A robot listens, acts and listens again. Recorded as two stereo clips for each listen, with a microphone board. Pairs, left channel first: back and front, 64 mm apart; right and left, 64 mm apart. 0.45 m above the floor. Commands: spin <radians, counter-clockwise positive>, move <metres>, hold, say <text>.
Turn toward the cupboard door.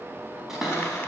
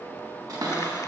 spin 1.48
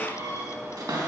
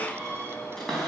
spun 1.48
say Found it: a cupboard door, straight ahead, 2 to 4 m away.